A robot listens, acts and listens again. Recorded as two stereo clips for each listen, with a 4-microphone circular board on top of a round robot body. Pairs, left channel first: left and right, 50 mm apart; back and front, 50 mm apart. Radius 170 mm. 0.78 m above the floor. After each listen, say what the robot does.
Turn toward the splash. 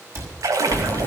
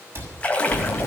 Turn 115° right.
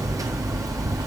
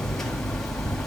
Facing where the splash came from. I can't hear it now.